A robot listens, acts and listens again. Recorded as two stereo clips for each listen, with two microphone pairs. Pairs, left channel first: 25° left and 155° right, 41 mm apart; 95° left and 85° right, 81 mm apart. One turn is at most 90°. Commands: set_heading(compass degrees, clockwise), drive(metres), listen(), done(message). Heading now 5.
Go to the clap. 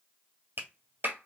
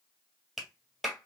set_heading(95)
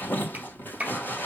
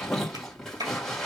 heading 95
set_heading(185)
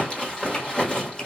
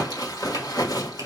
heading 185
set_heading(200)
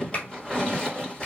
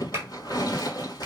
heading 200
set_heading(230)
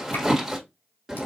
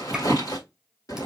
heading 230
listen()
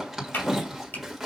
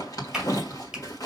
drive(1.0)
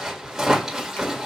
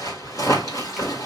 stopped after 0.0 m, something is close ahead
listen()
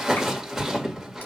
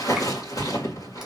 listen()
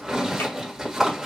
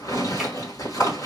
done("I heard a clap from this way, but can't make it out now. I did not reach it.")